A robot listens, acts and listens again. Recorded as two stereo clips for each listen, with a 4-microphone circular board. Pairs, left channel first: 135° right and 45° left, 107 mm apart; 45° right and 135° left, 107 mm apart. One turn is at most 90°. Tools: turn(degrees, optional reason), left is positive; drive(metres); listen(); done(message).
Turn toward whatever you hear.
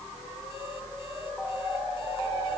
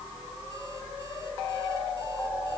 listen()
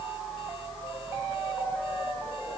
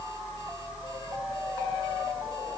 listen()
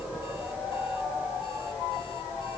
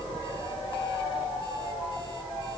done("I can't make out anything.")